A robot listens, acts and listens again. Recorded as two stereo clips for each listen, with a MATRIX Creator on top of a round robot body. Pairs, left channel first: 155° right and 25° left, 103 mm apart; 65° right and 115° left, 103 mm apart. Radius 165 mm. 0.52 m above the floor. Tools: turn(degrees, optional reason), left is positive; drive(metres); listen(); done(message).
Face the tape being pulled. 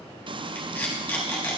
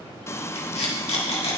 turn(degrees=-80, reason="The tape being pulled: 80° right.")
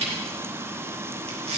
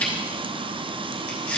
turn(degrees=10, reason="The tape being pulled is now 10° left.")
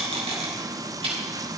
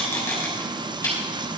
done("Facing the tape being pulled, 2 to 4 m away.")